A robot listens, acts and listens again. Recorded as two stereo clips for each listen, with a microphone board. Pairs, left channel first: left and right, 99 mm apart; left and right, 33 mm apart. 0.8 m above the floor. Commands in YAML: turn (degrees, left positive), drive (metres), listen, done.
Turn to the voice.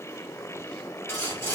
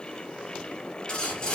listen: true
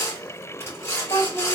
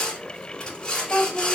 turn: 40
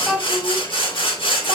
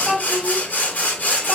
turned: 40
turn: -15
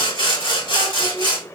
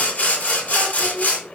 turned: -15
listen: true
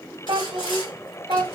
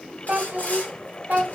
turn: -45
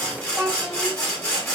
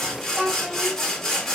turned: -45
done: "Found it: a child speaking, straight ahead."